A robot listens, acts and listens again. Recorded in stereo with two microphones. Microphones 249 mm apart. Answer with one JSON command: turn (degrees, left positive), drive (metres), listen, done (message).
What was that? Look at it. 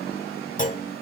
{"turn": 30}
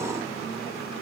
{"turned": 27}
{"listen": true}
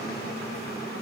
{"done": "I heard a clunk, but can't make it out now. It was about 5° left or 120° left."}